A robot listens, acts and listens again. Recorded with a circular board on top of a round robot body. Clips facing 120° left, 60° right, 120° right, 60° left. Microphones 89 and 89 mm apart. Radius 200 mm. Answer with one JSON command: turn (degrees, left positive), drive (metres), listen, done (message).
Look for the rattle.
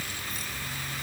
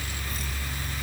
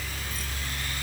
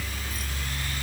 {"listen": true}
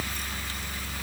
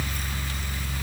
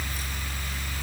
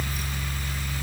{"listen": true}
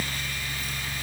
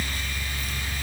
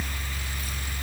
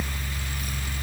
{"done": "I can't make out a rattle."}